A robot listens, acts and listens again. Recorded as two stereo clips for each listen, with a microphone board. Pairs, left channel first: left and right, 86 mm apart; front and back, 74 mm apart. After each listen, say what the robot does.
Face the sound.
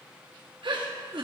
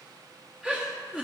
Turn 105° right.
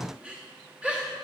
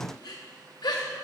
Turn 10° right.
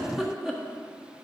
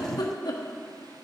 Facing the giggle.